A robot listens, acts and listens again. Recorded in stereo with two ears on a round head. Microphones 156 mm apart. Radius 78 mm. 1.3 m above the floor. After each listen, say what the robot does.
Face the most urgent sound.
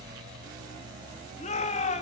Turn 40° left.
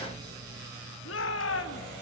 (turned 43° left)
Turn 100° left.
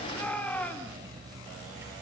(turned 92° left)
Turn 10° left.
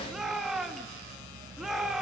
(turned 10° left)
Facing the shout.